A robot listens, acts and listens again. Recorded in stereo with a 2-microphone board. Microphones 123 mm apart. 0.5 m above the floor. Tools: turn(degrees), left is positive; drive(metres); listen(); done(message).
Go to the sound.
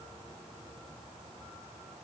listen()
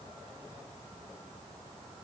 listen()
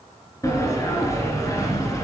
turn(degrees=25)
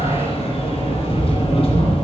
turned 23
turn(degrees=130)
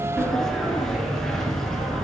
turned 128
drive(metres=1.0)
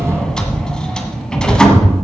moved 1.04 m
drive(metres=1.0)
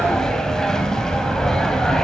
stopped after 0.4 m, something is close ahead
done("Arrived at the sliding door, straight ahead.")